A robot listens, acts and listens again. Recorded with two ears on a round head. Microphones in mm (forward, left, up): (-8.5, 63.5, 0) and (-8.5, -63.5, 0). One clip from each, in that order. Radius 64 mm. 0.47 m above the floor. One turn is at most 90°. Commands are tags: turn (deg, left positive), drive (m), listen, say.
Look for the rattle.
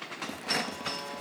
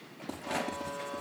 <turn deg="90"/>
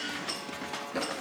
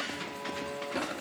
<turn deg="10"/>
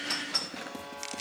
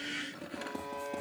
<say>Facing the rattle, 2 to 4 m away.</say>